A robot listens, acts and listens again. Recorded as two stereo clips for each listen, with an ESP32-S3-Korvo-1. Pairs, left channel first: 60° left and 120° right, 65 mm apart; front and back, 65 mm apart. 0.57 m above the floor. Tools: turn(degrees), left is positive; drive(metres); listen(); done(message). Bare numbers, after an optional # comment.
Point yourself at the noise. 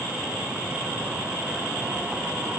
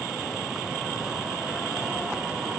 listen()
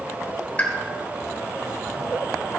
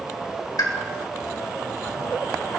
done("Found it: a pop, straight ahead, 1 to 2 m away.")